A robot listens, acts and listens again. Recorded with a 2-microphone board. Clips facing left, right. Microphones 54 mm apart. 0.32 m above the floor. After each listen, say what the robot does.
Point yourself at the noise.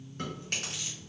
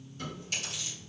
Turn 45° left.
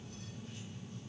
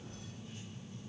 Keep listening.
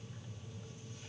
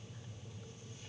Keep listening.
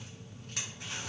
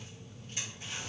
Turn 85° left.
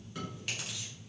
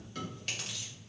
Turn 10° left.
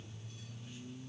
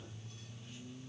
Keep listening.
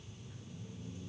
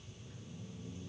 Keep listening.
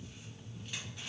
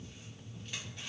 Facing where the chewing came from. I can't hear it now.